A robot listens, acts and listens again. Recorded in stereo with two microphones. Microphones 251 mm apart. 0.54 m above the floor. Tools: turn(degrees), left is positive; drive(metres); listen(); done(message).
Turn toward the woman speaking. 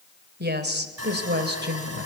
turn(degrees=-45)
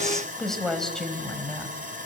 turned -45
done("Found it: a woman speaking, straight ahead, over 4 m away.")